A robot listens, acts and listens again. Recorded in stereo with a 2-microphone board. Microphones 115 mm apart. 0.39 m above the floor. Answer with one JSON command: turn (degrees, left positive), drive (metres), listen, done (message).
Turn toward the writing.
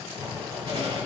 {"turn": -50}
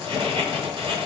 {"turn": -70}
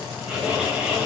{"turn": -10}
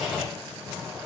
{"done": "Facing the writing."}